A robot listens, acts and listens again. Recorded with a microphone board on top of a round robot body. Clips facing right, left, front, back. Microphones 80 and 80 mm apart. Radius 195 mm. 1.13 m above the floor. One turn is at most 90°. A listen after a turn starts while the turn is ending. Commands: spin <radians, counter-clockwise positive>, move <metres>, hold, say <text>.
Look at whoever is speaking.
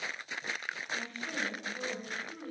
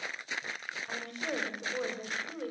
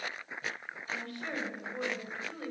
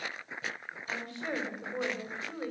spin 1.57
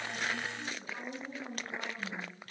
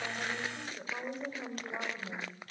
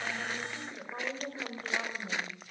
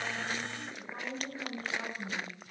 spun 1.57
spin 0.87
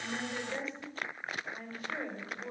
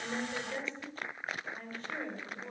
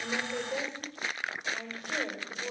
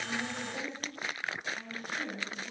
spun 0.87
spin -0.17
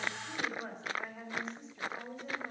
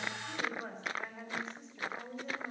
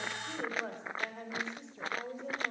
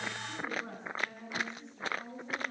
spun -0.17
say Found it: a woman speaking, straight ahead.